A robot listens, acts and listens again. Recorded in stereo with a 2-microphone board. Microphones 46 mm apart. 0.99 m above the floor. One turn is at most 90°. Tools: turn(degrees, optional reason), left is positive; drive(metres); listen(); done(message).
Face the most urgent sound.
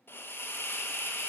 listen()
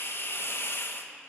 listen()
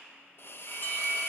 turn(degrees=45, reason="The alarm: about 45° left or 135° left.")
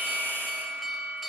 done("Facing the alarm, 1 to 2 m away.")